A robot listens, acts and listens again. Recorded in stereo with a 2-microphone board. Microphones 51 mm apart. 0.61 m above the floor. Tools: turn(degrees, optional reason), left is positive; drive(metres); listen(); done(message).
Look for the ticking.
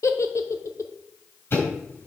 turn(degrees=50, reason="The ticking: about 50° left or 130° left.")
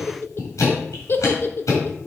turn(degrees=80, reason="So it is at 80° left.")
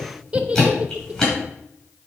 turn(degrees=10, reason="The ticking is now 10° left.")
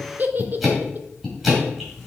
done("Found it: ticking, straight ahead, over 4 m away.")